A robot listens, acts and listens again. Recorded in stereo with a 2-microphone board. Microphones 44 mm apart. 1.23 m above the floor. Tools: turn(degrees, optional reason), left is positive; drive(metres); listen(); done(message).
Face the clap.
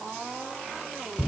listen()
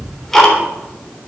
listen()
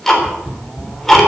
done("I can't make out a clap, only ticking.")